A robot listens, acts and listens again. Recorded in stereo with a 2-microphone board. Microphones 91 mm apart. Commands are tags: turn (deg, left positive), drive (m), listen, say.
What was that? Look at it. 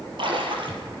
<turn deg="-65"/>
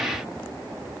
<listen/>
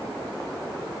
<say>I heard a splash, but can't make it out now. It was about straight ahead or 50° right.</say>